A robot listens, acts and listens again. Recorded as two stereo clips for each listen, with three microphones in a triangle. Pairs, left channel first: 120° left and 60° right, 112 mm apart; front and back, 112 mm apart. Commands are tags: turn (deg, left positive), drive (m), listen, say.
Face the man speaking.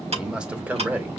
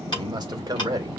<turn deg="-135"/>
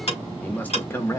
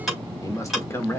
<turn deg="60"/>
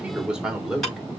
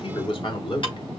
<turn deg="25"/>
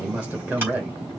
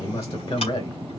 <turn deg="15"/>
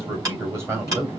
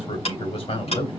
<say>Found it: a man speaking, straight ahead, 2 to 4 m away.</say>